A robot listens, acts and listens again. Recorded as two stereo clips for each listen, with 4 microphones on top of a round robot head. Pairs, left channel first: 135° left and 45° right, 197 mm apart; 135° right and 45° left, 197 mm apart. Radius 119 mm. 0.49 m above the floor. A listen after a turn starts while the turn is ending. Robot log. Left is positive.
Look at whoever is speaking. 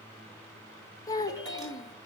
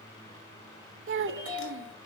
note: The child speaking: 60° left.
cmd yaw +60
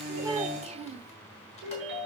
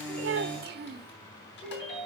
note: The child speaking is now 10° left.
cmd yaw +10
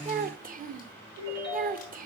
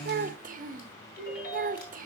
end: Facing the child speaking.